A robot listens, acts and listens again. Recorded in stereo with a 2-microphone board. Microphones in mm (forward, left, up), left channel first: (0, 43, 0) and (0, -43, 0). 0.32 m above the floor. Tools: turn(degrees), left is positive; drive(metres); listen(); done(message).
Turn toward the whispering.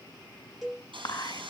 turn(degrees=55)
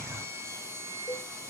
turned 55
listen()
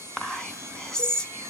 turn(degrees=10)
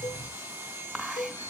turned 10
done("Found it: whispering, straight ahead, 2 to 4 m away.")